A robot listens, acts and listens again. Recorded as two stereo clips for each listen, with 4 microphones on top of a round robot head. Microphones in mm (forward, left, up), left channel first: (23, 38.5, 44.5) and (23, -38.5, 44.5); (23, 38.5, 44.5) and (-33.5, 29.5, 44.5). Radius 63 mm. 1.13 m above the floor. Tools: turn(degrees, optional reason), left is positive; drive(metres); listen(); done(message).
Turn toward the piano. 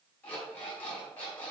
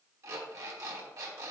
listen()
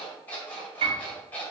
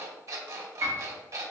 turn(degrees=-115, reason="The piano: 115° right.")
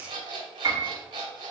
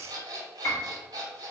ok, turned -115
turn(degrees=-50, reason="The piano is now 50° right.")
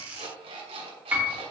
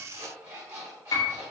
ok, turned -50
turn(degrees=-20, reason="The piano is now 20° right.")
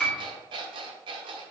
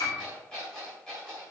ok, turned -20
done("Found it: a piano, straight ahead, 2 to 4 m away.")